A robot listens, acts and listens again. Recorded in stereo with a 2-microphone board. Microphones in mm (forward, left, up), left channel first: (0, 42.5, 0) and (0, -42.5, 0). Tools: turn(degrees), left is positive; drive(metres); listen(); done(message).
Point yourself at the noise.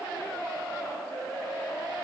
listen()
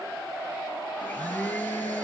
turn(degrees=25)
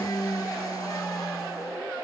turn(degrees=130)
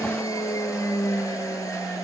turn(degrees=40)
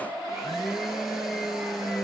done("Found it: a blender, straight ahead, 1 to 2 m away.")